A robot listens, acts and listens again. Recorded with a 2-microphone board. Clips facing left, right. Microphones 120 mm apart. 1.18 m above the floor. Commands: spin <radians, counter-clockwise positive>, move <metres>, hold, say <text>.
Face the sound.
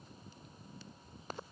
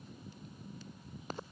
hold
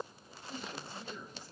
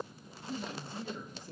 spin -0.87
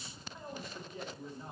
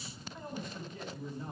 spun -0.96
say Found it: a man speaking, straight ahead, 2 to 4 m away.